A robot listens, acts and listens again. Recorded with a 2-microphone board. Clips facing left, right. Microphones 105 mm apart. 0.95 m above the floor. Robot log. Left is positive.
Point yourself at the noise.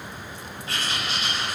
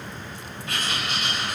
note: The writing: about 30° left or 150° left.
cmd yaw +30
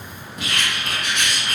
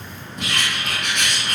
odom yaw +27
end: Found it: writing, straight ahead, 1 to 2 m away.